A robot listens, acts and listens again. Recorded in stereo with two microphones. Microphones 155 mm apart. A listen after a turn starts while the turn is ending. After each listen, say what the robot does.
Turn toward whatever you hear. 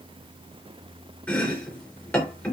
Turn 30° left.
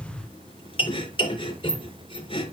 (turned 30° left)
Turn 140° left.
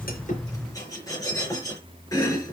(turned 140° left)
Turn 20° left.
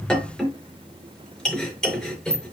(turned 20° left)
Facing the chopping, over 4 m away.